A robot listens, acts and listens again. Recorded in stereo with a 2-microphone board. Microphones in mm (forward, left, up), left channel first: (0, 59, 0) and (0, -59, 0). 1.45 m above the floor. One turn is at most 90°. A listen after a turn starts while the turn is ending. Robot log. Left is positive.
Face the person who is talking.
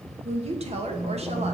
note: The woman speaking: about 60° right or 120° right.
cmd yaw -60
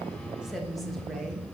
end: Facing the woman speaking.